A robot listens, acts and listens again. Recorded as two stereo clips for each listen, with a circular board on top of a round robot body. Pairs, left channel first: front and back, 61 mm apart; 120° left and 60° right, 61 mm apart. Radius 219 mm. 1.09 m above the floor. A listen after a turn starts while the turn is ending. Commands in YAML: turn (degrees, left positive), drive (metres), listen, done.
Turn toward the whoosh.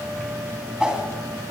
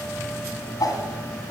turn: 100
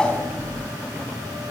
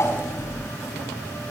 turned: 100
listen: true
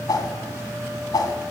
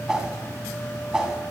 turn: 20
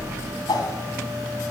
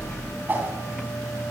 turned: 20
done: "Found it: a whoosh, straight ahead, 2 to 4 m away."